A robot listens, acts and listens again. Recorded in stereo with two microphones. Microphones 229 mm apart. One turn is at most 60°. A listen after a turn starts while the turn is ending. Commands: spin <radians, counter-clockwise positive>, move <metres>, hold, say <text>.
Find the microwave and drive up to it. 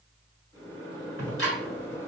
spin 0.35
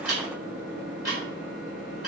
spin 1.05
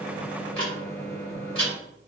spin 1.05
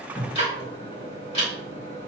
spin 0.52
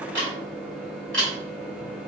move 1.0
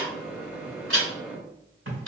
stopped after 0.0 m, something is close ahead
spin -0.17
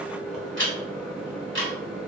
say Something is in my way. I am facing the microwave but have not reached it.